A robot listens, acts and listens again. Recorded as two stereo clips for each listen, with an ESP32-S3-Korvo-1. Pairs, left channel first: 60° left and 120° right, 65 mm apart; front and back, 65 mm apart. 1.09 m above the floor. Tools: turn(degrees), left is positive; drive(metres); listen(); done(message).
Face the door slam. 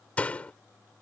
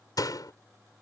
turn(degrees=-10)
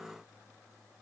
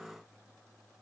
done("Facing where the door slam came from. I can't hear it now.")